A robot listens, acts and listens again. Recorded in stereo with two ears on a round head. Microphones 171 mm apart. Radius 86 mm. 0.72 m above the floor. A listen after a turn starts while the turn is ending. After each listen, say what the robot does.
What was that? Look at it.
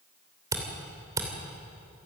Turn 20° right.
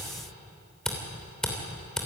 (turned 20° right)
Found it: a camera shutter, straight ahead, 2 to 4 m away.